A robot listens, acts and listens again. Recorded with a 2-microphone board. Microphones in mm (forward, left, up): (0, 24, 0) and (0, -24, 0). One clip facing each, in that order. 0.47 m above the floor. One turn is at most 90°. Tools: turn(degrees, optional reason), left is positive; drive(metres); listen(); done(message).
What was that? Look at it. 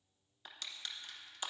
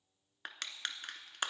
turn(degrees=-65, reason="The crushing: about 65° right or 115° right.")
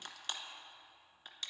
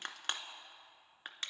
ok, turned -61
turn(degrees=-50, reason="So it is at 50° right.")
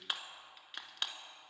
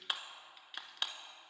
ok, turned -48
done("Found it: crushing, straight ahead.")